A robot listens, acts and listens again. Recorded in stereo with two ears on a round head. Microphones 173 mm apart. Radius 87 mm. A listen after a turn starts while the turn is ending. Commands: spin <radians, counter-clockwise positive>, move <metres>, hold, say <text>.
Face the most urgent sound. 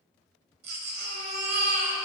spin -0.87
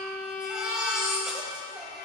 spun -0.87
say Facing the baby crying, 1 to 2 m away.